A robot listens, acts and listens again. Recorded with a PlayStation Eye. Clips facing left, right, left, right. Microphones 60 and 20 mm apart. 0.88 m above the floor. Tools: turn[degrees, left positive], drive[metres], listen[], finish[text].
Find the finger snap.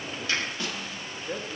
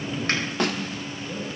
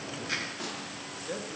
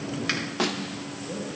Action: listen[]
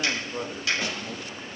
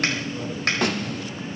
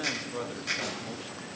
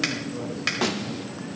Thought: The finger snap: about 55° right or 125° right.
Action: turn[-55]
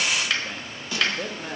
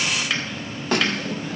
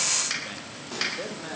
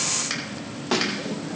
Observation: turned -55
Action: finish[Facing the finger snap.]